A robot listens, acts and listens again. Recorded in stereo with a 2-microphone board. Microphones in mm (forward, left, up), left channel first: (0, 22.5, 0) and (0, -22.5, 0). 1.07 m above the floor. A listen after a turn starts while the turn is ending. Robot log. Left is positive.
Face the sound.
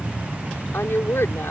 note: The woman speaking: about 65° left or 115° left.
cmd yaw +65
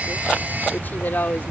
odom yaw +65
note: So it is at 45° left.
cmd yaw +45
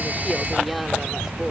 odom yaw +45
cmd idle
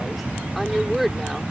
end: Facing the woman speaking.